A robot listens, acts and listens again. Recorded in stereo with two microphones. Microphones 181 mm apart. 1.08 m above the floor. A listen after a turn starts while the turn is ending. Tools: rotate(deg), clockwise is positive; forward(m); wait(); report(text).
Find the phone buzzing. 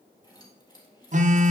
rotate(40)
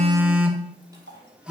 report("Found it: a phone buzzing, straight ahead.")